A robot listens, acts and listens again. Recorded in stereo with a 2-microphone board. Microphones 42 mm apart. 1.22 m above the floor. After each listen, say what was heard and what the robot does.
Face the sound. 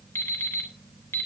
Turn 90° left.
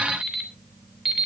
Found it: an alarm clock, straight ahead.